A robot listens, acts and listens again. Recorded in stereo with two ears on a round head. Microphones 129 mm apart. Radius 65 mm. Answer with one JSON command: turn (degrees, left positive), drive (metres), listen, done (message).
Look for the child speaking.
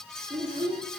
{"turn": -30}
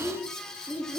{"done": "Facing the child speaking."}